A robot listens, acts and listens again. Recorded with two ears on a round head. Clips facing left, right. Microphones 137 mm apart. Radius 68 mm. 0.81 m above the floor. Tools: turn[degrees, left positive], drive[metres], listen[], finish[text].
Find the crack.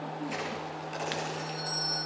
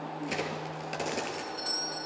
Thought: The crack: about 70° right or 110° right.
Action: turn[-70]
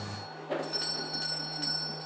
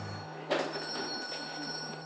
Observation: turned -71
Action: listen[]
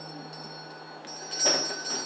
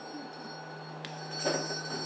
Action: finish[I heard a crack, but can't make it out now. It was about straight ahead or 40° right.]